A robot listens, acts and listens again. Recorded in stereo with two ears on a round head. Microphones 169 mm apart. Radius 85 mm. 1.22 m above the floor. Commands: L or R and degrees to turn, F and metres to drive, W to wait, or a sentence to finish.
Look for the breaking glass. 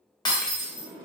L25
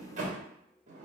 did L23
W
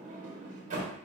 I heard breaking glass, but can't make it out now. It was about straight ahead or 135° left.